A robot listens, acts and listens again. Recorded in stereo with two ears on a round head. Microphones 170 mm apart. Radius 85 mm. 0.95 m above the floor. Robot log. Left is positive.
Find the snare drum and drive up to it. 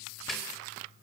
cmd yaw +30
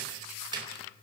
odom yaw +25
note: So it is at 25° right.
cmd yaw -25
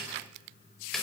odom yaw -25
cmd fwd 1.0
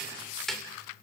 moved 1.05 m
cmd fwd 1.0
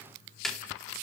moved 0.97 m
cmd fwd 1.0
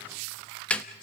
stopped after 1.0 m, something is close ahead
end: Arrived at the snare drum, straight ahead.